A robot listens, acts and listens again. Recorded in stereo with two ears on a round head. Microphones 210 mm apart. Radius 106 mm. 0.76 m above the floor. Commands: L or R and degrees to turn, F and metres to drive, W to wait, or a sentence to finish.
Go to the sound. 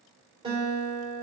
R20
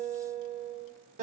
R140
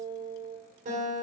R35
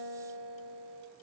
F1.0
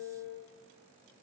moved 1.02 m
R10
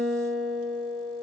F1.0
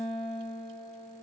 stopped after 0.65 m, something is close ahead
I am next to the guitar.